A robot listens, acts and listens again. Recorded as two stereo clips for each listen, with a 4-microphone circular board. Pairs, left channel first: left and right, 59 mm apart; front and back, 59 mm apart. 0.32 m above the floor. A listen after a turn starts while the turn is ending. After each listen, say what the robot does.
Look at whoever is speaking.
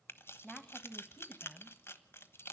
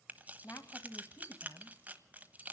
Turn 10° left.
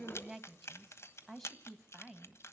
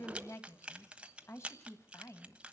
Found it: a woman speaking, straight ahead, 2 to 4 m away.